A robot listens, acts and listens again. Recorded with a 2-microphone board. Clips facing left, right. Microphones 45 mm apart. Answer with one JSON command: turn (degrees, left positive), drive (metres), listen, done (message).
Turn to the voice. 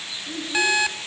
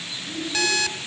{"turn": 60}
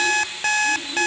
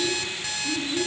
{"done": "Facing the child speaking."}